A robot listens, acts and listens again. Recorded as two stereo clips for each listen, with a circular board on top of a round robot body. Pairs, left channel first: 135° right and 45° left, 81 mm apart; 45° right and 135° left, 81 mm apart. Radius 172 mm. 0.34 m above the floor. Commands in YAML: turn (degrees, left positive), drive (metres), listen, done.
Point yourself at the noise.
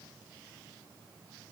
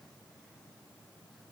listen: true
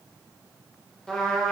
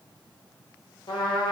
turn: -55
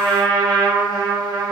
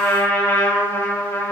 turn: 15
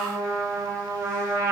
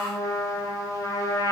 done: "Facing the trumpet, under 1 m away."